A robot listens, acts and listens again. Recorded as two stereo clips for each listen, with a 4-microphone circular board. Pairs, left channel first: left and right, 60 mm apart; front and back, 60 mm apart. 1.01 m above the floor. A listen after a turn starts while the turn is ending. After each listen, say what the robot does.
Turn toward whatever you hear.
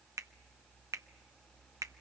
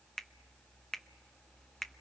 Turn 85° right.
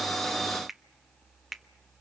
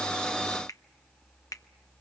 Found it: a finger snap, straight ahead.